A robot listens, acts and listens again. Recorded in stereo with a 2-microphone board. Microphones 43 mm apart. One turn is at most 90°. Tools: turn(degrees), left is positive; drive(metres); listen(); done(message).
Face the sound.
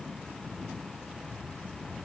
listen()
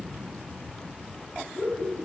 turn(degrees=25)
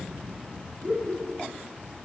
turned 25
done("Facing the laughter, over 4 m away.")